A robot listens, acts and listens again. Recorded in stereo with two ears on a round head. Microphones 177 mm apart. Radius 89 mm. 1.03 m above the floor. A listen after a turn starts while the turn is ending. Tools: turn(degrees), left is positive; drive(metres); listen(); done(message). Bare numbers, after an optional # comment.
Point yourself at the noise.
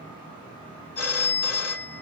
turn(90)
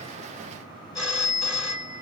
done("Facing the phone ringing.")